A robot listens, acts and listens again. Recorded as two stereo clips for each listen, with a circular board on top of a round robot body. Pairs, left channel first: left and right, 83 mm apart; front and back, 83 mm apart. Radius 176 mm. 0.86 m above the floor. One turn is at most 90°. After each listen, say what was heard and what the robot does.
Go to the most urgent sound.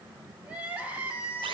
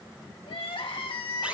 The crying: 15° right. Turn 15° right.
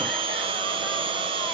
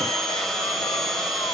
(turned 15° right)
Keep listening.
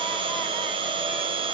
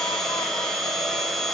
Keep listening.
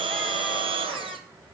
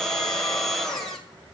Facing where the crying came from. I can't hear it now. I did not reach it.